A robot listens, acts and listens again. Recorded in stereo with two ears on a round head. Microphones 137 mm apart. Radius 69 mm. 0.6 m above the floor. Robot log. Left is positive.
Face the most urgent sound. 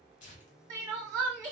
note: The crying: about 20° right or 160° right.
cmd yaw -20
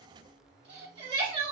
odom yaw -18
note: So it is at 140° right.
cmd yaw -140
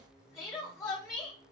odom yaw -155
note: The crying is now 20° left.
cmd yaw +20
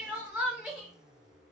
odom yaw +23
end: Found it: crying, straight ahead.